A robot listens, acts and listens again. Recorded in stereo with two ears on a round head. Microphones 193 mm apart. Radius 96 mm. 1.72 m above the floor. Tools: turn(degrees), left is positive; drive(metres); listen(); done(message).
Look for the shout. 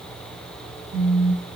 listen()
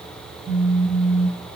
listen()
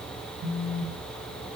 done("I can't make out a shout, only a phone buzzing.")